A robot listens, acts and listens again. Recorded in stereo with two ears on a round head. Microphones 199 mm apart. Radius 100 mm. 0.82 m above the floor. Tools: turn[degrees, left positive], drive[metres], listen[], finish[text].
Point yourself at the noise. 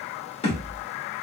Thought: The thud: about 25° left or 155° left.
Action: turn[25]
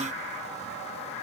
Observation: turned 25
Action: listen[]
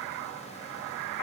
Action: finish[I heard a thud, but can't make it out now. It was about straight ahead or 130° left.]